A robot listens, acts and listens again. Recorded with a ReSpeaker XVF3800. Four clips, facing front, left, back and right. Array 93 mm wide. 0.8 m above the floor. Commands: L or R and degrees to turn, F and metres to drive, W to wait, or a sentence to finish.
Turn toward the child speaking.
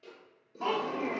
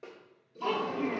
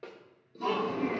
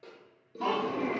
R45
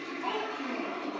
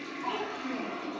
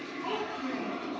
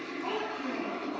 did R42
R15
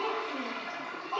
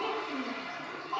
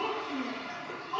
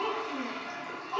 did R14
R15
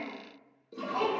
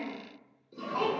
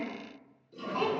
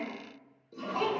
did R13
R10
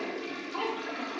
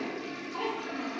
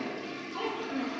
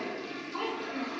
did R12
Found it: a child speaking, straight ahead, 2 to 4 m away.